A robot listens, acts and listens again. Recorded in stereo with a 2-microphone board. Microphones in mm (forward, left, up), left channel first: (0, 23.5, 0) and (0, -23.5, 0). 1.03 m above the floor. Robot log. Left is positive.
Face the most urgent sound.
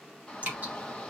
cmd yaw +30
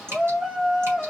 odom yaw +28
note: So it is at 15° right.
cmd yaw -15
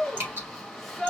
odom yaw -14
end: Facing the shout.